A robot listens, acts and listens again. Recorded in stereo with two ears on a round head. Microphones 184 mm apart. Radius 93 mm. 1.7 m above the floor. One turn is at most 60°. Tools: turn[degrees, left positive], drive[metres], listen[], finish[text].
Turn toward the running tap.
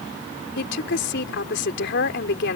Action: listen[]
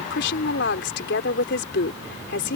Action: listen[]
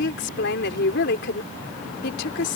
Action: finish[I can't make out a running tap, only a woman speaking.]